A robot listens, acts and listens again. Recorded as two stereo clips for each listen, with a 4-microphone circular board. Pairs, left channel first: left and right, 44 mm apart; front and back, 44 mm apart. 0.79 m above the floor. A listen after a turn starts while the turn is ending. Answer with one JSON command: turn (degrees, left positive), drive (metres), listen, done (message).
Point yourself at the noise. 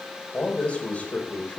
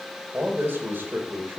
{"turn": 140}
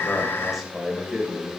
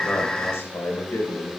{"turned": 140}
{"turn": -10}
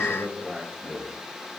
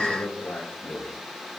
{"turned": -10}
{"done": "Facing the man speaking, 2 to 4 m away."}